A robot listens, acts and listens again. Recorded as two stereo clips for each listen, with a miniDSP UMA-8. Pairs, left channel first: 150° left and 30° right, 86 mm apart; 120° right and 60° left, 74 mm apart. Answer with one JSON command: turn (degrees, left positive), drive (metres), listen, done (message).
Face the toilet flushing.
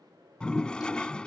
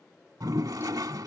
{"turn": 75}
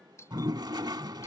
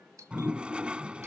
{"turn": -10}
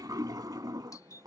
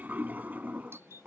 {"done": "Found it: a toilet flushing, straight ahead."}